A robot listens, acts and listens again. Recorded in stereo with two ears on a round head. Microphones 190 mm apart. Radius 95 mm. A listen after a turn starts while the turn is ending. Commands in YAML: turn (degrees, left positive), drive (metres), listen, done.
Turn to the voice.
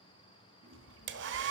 turn: 60
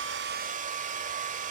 listen: true
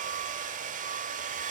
listen: true
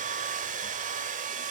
done: "I heard a child speaking, but can't make it out now. It was about straight ahead or 60° left."